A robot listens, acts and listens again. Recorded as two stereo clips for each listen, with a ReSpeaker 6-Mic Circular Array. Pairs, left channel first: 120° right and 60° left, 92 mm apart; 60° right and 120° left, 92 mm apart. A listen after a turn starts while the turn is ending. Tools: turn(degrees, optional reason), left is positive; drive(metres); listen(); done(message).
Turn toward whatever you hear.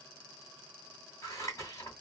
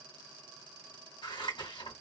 turn(degrees=-70, reason="The scissors: 70° right.")
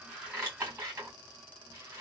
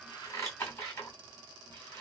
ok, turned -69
done("Facing the scissors, 2 to 4 m away.")